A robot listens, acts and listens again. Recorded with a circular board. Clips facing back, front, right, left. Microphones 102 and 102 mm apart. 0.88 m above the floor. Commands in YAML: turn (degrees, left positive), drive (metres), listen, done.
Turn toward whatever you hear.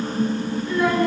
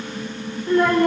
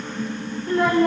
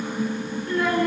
turn: -35
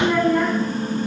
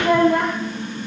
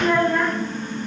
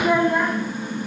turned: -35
turn: 15
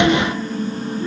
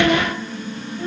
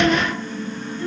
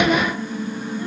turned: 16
listen: true
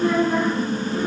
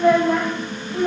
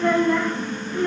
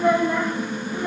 turn: 20
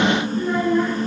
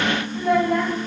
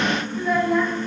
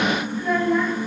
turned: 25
done: "Facing the child speaking."